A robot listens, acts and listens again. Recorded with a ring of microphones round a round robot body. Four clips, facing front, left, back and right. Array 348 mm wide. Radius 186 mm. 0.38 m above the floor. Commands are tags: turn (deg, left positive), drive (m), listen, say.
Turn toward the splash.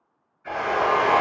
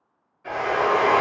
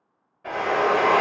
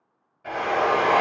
<listen/>
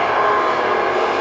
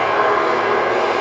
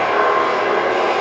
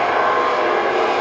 <listen/>
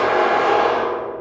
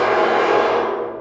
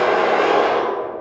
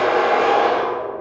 <say>I can't make out a splash, only a drill.</say>